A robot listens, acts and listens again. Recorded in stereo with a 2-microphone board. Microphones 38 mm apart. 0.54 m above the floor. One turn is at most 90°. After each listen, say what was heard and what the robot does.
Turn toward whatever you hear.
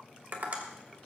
The tapping: about 55° right or 125° right. Turn 55° right.
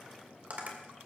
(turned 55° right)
So it is at 60° right. Turn 60° right.
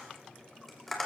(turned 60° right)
Found it: tapping, straight ahead.